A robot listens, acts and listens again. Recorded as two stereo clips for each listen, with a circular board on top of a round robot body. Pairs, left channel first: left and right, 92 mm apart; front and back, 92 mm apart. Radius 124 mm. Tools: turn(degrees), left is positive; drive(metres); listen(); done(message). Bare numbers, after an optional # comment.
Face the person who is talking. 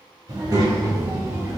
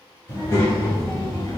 # The child speaking: 45° right.
turn(-45)
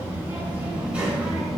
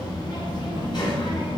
done("Facing the child speaking, 1 to 2 m away.")